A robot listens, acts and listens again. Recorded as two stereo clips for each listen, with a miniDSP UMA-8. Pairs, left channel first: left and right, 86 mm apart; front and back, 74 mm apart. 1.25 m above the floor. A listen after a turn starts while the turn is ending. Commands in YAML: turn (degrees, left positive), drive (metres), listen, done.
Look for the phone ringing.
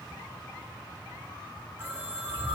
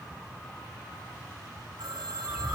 turn: -160
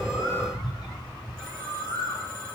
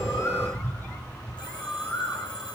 turn: 10
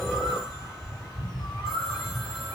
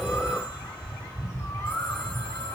listen: true
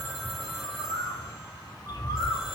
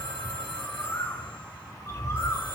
done: "Found it: a phone ringing, straight ahead, over 4 m away."